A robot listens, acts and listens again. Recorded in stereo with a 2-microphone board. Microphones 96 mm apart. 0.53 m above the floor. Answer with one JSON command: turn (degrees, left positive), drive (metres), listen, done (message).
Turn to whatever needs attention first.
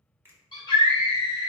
{"turn": 55}
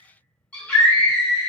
{"turn": 15}
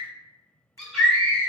{"done": "Facing the scream, 1 to 2 m away."}